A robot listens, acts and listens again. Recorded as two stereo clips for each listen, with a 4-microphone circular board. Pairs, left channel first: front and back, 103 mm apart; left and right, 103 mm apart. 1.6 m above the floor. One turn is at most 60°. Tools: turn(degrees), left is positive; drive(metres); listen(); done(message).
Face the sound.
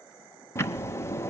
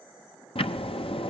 turn(degrees=60)
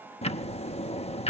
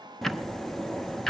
done("Facing the ticking, under 1 m away.")